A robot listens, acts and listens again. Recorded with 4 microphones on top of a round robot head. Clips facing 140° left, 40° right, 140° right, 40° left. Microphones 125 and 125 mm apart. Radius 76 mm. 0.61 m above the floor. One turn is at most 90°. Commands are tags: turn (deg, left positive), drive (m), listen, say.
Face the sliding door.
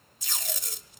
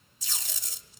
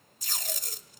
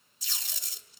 <listen/>
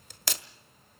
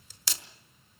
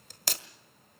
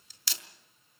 <listen/>
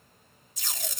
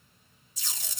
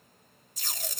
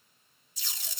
<say>I can't make out a sliding door, only tape being pulled.</say>